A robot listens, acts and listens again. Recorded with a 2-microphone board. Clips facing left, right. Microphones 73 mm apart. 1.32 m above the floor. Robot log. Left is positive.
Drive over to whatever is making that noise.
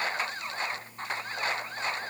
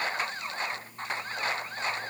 cmd idle
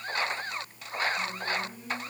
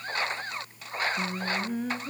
note: The singing: about 70° right or 110° right.
cmd yaw -70
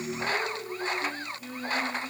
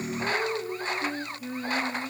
note: So it is at 20° right.
cmd yaw -20
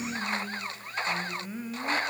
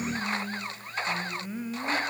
cmd fwd 1.0
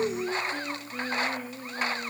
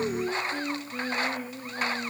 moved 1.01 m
cmd fwd 1.0
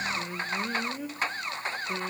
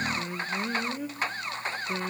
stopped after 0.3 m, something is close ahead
end: Arrived at the singing, straight ahead.